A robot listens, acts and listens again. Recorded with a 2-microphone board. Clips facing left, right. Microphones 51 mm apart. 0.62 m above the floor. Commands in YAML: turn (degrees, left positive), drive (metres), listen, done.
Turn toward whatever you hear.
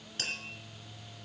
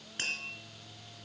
turn: -25
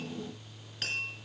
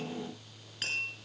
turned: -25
done: "Facing the tapping."